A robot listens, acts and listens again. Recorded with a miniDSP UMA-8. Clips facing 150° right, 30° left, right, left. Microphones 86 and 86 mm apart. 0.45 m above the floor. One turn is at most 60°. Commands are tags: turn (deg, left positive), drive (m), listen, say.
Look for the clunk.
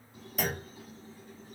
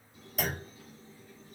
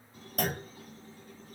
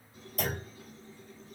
<turn deg="-60"/>
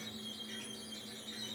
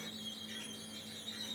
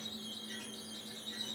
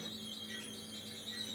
<say>I heard a clunk from this way, but can't make it out now.</say>